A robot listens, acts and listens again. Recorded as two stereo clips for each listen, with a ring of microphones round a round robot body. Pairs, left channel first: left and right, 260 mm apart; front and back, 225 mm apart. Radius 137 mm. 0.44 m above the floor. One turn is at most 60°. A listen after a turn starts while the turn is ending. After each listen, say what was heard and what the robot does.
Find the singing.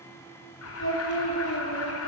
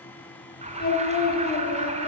The singing: 50° left. Turn 50° left.
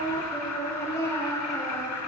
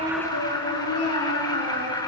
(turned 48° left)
The singing is now 10° left. Turn 10° left.
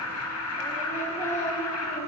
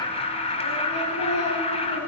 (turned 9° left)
Keep listening.
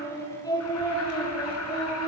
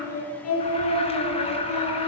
The singing is now 15° left. Turn 15° left.
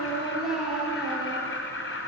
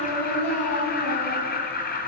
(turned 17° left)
Found it: singing, straight ahead.